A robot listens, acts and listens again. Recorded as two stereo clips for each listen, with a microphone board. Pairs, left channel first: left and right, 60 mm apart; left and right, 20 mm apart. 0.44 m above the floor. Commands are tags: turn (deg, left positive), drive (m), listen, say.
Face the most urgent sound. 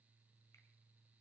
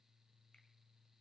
<listen/>
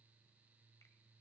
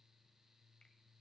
<listen/>
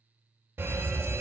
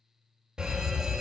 <turn deg="-45"/>
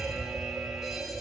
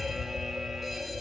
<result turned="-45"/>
<turn deg="-10"/>
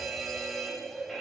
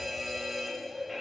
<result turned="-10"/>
<say>Found it: a fire alarm, straight ahead.</say>